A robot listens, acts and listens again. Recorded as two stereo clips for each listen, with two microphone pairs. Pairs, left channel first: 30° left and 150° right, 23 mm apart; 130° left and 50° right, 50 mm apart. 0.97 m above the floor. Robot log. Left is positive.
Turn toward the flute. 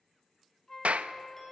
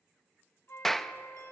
note: The flute: 95° left.
cmd yaw +95
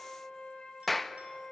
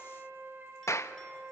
end: Found it: a flute, straight ahead.